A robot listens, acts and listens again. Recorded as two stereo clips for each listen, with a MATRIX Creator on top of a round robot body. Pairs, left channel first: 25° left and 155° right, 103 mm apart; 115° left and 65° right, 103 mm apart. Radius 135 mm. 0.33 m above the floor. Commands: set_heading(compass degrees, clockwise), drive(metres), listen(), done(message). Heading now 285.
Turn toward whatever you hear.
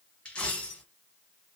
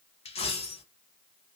set_heading(185)
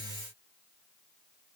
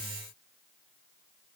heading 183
done("I heard a dropped coin from this way, but can't make it out now.")